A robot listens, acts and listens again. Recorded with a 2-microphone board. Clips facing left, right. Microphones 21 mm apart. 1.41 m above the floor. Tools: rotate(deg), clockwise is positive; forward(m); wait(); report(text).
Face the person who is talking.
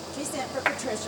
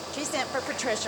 rotate(30)
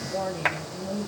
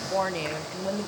rotate(120)
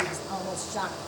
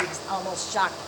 rotate(45)
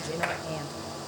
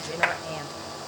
rotate(20)
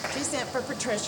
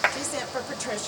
report("Facing the woman speaking.")